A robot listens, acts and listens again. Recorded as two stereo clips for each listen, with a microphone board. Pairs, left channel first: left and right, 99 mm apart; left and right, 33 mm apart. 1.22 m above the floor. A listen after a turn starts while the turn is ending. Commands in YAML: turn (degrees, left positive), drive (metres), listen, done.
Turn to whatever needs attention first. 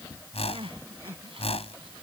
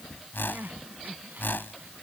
turn: -65
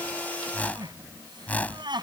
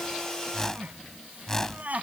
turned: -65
turn: -50
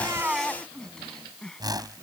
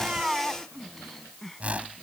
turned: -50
done: "Facing the crying."